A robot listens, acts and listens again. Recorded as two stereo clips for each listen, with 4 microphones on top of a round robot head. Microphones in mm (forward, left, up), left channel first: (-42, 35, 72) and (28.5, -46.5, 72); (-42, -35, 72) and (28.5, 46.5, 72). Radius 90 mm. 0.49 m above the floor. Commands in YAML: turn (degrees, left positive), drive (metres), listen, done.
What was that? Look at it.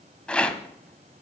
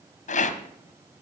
turn: -145
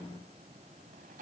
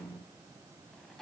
listen: true
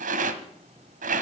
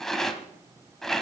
turn: -45
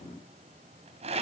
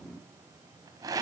turn: -15
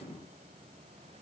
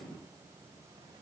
listen: true
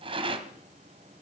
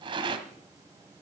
done: "Found it: a rattle, straight ahead, 1 to 2 m away."